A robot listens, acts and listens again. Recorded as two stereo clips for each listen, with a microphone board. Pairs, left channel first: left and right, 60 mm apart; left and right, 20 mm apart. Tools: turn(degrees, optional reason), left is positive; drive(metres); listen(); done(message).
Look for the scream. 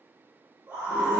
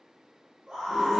turn(degrees=-30, reason="The scream: about 30° right or 150° right.")
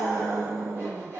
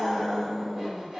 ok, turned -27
turn(degrees=-120, reason="So it is at 120° right.")
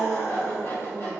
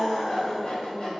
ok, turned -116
done("Found it: a scream, straight ahead, 1 to 2 m away.")